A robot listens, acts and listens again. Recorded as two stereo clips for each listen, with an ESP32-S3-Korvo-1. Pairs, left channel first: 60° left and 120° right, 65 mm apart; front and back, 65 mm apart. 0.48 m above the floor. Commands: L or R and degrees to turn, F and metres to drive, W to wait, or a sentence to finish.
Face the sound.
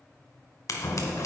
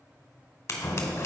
L35
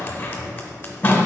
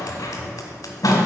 Facing the scissors, 1 to 2 m away.